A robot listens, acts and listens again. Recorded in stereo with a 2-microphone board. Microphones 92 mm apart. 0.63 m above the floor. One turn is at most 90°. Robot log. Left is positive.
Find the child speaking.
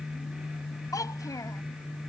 note: The child speaking: about 40° left or 140° left.
cmd yaw +40
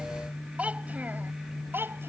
note: So it is at 25° right.
cmd yaw -25
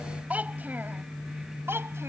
note: The child speaking is now 25° right.
cmd yaw -25
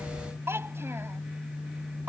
note: The child speaking is now 25° right.
cmd yaw -25
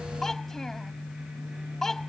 end: Found it: a child speaking, straight ahead.